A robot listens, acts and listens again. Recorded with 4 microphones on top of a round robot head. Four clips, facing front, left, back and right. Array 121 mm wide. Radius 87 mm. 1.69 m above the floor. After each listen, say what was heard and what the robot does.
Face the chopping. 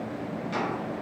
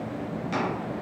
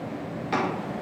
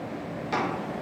The chopping: 160° right. Turn 160° right.
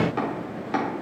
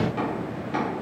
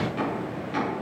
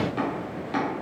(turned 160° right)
The chopping is now 10° right. Turn 10° right.
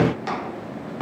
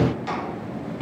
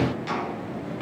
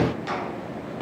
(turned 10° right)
Found it: chopping, straight ahead, 2 to 4 m away.